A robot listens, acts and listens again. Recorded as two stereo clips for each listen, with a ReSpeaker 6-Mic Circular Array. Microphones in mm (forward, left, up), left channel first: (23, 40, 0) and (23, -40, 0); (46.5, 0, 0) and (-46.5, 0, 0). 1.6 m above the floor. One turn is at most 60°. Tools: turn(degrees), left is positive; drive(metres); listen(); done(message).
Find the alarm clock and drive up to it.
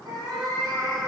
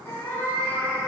listen()
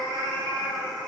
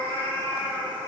listen()
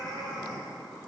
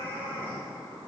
done("I can't make out an alarm clock, only a cat meowing.")